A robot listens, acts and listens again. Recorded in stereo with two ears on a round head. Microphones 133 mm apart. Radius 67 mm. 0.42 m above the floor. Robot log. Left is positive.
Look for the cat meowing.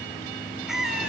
cmd yaw -30
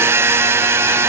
cmd idle
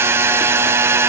cmd idle
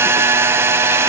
end: I heard a cat meowing, but can't make it out now. It was about 25° left or 145° right.